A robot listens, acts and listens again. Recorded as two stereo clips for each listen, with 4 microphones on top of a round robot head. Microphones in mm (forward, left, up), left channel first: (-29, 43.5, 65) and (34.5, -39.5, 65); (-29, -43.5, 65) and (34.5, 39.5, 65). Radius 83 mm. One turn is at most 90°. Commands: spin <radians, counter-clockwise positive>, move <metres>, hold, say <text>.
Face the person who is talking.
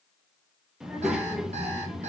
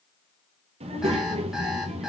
spin 0.52
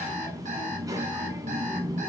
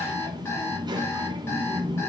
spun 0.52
say Found it: a child speaking, straight ahead.